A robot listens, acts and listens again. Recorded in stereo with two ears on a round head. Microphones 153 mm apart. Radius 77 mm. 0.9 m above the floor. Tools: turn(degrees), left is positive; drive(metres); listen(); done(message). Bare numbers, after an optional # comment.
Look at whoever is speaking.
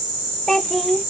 turn(30)
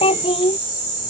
# So it is at 150° left.
turn(150)
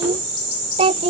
# The child speaking is now 30° right.
turn(-30)
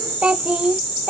done("Facing the child speaking.")